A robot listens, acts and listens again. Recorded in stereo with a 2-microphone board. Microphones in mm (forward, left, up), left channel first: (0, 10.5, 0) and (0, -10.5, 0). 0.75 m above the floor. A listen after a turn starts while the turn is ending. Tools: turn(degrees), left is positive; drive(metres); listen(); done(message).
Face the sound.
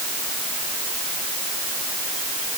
listen()
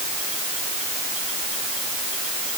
listen()
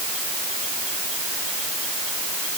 done("I can't make out anything to turn to.")